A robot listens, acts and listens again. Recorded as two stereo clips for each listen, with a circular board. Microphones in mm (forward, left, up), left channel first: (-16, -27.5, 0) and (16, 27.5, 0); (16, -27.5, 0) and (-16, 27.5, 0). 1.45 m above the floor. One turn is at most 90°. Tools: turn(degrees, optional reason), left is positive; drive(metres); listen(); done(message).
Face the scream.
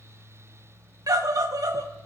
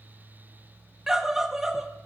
turn(degrees=40, reason="The scream: 40° left.")
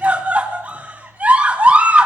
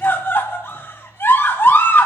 done("Found it: a scream, straight ahead.")